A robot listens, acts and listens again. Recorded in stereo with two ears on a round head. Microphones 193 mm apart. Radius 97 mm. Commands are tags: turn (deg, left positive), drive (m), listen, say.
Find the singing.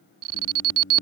<turn deg="40"/>
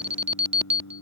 <turn deg="100"/>
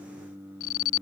<turn deg="-10"/>
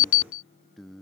<say>Found it: singing, straight ahead.</say>